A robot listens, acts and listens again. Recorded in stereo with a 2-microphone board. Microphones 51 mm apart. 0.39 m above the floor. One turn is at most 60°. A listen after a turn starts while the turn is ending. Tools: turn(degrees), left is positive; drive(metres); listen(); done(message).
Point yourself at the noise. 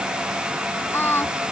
turn(degrees=50)
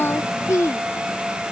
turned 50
turn(degrees=60)
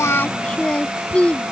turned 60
turn(degrees=25)
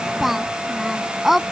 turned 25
done("Found it: singing, straight ahead.")